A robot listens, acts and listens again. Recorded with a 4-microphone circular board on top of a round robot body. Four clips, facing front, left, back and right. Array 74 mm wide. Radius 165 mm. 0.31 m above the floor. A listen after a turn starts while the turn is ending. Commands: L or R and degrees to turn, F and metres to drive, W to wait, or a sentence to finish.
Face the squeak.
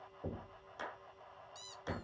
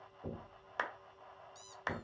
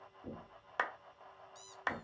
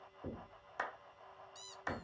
R50
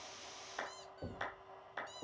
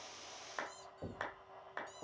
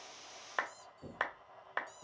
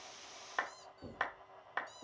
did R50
Found it: a squeak, straight ahead, under 1 m away.